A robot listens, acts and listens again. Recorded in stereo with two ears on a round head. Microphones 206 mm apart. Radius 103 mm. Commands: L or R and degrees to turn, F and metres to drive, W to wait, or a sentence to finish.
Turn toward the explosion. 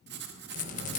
R30
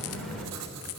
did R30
Facing the explosion, 2 to 4 m away.